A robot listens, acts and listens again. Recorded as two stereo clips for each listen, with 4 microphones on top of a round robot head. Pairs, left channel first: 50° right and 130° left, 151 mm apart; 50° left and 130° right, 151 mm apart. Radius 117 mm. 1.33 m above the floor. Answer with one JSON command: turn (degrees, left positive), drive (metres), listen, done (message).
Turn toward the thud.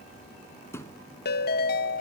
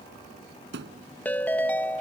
{"turn": -125}
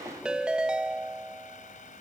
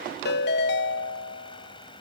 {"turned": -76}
{"turn": -50}
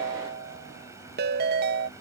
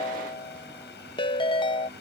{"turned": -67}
{"turn": 20}
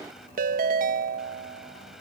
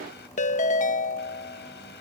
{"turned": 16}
{"done": "Facing where the thud came from. I can't hear it now."}